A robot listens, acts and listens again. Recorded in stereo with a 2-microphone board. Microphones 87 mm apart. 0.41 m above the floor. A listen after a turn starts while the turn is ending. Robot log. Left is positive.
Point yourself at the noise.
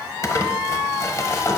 note: The crumpling: about 35° left or 145° left.
cmd yaw +35
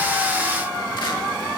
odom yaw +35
cmd idle
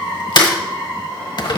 note: So it is at 105° left.
cmd yaw +105
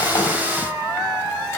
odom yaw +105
cmd idle
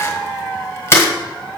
note: The crumpling is now 35° left.
cmd yaw +35
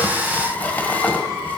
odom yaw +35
note: The crumpling is now 25° left.
cmd yaw +25
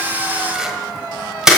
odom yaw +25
end: Facing the crumpling, 1 to 2 m away.